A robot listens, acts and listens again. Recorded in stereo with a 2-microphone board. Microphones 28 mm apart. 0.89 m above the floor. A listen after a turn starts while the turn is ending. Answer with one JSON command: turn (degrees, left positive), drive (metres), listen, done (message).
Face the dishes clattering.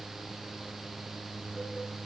{"listen": true}
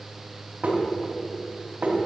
{"turn": -90}
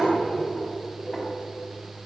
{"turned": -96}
{"done": "Found it: dishes clattering, straight ahead."}